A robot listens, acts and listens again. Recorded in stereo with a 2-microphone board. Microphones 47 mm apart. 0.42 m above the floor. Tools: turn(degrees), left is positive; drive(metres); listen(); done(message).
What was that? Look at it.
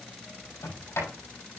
turn(degrees=90)
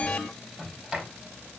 turn(degrees=-15)
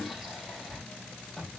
done("Found it: a sliding door, straight ahead.")